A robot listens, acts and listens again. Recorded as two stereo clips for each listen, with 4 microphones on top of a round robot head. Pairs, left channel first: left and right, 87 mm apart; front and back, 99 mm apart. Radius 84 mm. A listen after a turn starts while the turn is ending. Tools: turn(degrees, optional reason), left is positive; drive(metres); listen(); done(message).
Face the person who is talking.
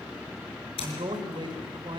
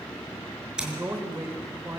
turn(degrees=-110, reason="The man speaking: 110° right.")
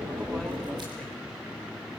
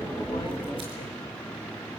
listen()
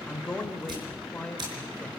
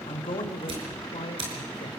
turn(degrees=15, reason="The man speaking is now 15° left.")
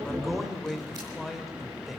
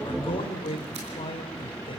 done("Facing the man speaking, 2 to 4 m away.")